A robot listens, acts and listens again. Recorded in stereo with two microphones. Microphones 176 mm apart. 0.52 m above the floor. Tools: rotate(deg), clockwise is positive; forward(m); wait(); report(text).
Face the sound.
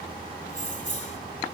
rotate(-45)
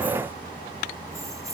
wait()
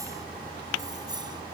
rotate(25)
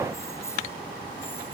wait()
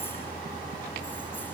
wait()
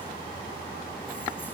report("Facing where the keys jangling came from. I can't hear it now.")